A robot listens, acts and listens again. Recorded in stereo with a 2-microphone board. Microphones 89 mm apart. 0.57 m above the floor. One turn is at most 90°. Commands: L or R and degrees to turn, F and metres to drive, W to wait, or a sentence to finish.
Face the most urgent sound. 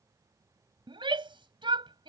R75
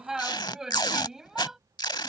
Facing the shout.